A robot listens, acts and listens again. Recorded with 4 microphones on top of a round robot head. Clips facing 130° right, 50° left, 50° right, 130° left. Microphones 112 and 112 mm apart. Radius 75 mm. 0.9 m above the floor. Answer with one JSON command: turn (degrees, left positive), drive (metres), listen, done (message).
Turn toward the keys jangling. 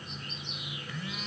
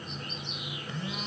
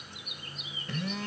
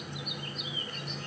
{"listen": true}
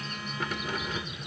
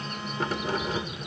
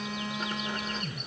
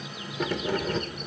{"turn": 105}
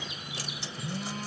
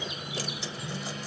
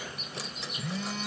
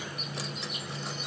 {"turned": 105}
{"listen": true}
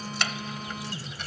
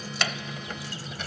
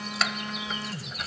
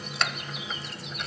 {"turn": 40}
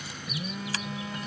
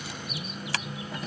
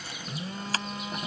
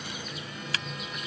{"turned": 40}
{"turn": 10}
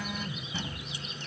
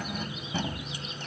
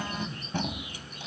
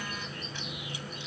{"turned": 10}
{"done": "Found it: keys jangling, straight ahead."}